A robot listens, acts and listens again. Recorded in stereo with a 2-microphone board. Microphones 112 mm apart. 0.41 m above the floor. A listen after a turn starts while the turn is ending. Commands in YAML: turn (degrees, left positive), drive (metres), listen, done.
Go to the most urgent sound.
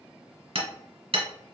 listen: true
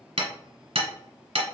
listen: true
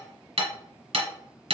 done: "I can't make out anything urgent to turn to."